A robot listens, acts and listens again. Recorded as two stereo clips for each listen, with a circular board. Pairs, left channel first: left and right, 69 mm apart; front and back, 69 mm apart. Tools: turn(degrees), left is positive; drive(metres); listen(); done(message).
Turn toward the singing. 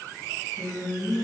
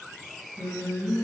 turn(degrees=165)
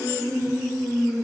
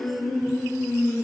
turn(degrees=30)
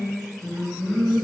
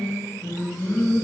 turn(degrees=40)
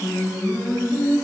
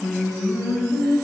turn(degrees=25)
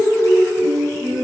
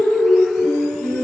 turn(degrees=-10)
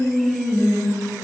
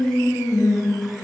done("Found it: singing, straight ahead.")